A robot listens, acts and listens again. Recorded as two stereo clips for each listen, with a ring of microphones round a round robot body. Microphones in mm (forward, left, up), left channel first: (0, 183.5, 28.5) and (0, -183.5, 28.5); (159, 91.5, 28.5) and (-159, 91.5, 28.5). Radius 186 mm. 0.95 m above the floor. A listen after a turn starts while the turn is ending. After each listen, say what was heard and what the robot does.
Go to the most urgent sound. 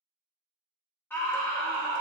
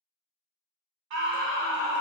The scream: 175° left. Turn 175° left.
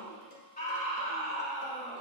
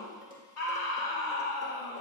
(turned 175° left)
The scream is now 25° left. Turn 25° left.
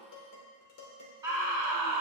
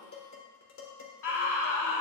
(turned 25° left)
The scream is now 10° right. Turn 10° right.
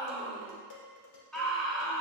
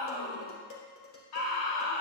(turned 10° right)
Drive 1.0 m forward.
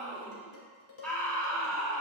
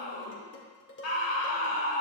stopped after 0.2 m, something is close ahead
Blocked. The scream is further on, straight ahead.